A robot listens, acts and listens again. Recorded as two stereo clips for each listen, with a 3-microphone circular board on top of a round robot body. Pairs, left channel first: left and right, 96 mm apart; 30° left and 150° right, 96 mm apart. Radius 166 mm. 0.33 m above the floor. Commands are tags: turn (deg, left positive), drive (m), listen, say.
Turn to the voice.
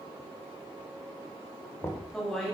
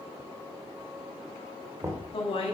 <say>Facing the woman speaking, 2 to 4 m away.</say>